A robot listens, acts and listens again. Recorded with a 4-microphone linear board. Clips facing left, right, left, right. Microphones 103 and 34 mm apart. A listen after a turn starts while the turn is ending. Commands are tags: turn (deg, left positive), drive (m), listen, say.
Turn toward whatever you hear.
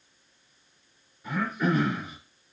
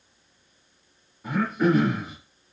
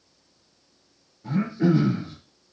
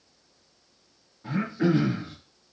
<turn deg="-35"/>
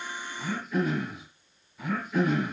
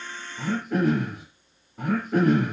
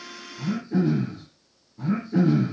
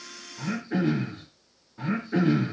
<turn deg="-110"/>
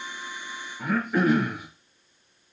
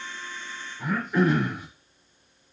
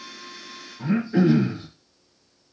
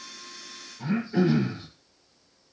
<turn deg="15"/>
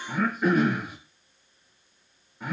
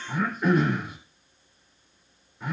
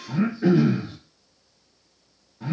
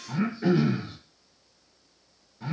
<say>Found it: throat clearing, straight ahead.</say>